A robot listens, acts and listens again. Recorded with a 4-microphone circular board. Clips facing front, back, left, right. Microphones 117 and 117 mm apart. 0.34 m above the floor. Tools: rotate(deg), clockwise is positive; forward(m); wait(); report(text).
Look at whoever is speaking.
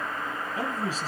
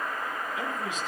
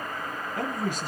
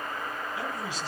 rotate(-50)
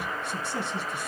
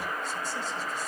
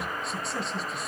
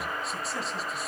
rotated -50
report("Facing the man speaking, 2 to 4 m away.")